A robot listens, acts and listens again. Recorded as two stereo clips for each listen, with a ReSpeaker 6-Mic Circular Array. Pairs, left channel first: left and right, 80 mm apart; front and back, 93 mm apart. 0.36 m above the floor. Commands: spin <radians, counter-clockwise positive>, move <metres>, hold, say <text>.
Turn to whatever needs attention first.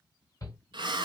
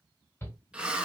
spin 1.05
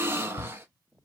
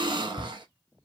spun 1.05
spin 0.26
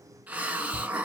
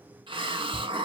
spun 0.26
hold
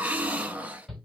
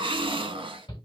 say Found it: a shout, straight ahead, 1 to 2 m away.